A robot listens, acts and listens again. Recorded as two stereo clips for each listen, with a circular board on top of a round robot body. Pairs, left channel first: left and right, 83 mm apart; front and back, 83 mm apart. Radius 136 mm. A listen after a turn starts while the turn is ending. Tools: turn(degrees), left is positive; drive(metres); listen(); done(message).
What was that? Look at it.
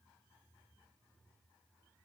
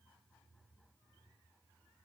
listen()
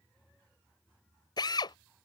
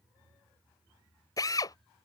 turn(degrees=50)
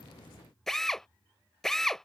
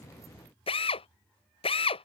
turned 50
done("Found it: a drill, straight ahead.")